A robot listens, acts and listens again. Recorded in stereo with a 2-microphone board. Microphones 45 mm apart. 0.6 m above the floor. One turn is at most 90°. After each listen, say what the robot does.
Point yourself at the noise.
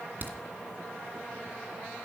Turn 45° right.
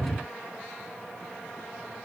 Keep listening.
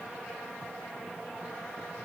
I heard a crack, but can't make it out now. It was about straight ahead or 90° right.